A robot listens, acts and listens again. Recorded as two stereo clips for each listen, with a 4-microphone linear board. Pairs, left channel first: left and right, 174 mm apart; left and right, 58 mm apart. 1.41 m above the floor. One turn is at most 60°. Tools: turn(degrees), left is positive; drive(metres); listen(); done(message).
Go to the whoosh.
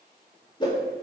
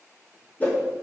turn(degrees=25)
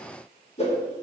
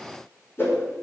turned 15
turn(degrees=60)
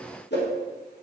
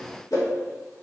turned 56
turn(degrees=60)
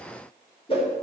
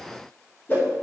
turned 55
turn(degrees=35)
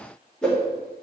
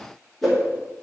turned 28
drive(metres=1.0)
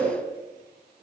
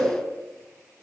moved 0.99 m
turn(degrees=10)
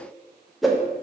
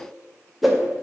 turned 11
drive(metres=1.0)
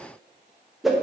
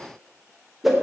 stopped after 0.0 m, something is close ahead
done("Arrived at the whoosh, straight ahead.")